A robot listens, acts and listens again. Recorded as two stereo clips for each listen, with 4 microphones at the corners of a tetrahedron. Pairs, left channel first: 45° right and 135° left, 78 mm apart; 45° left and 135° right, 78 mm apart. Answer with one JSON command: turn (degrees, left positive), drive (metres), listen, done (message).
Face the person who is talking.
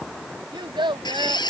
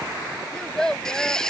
{"turn": 125}
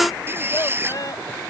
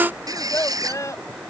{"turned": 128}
{"done": "Facing the child speaking."}